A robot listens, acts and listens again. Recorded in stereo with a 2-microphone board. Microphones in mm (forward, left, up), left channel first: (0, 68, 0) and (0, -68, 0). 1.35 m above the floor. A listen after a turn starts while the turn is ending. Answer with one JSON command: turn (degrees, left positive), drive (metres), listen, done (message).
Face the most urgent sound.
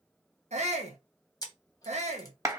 {"turn": -55}
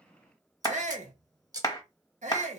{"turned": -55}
{"turn": -65}
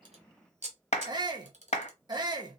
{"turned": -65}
{"turn": -35}
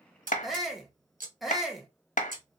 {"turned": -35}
{"done": "Facing the shout."}